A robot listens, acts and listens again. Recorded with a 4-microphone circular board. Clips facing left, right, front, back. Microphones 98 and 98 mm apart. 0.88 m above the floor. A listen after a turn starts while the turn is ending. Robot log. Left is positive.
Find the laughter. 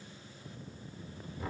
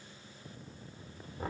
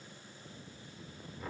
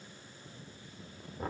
cmd idle
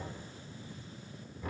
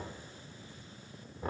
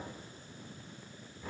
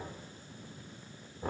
cmd idle
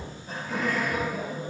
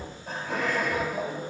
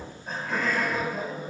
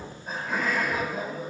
note: The laughter: 95° right.
cmd yaw -95
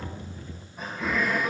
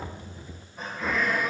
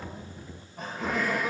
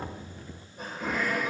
end: Facing the laughter, over 4 m away.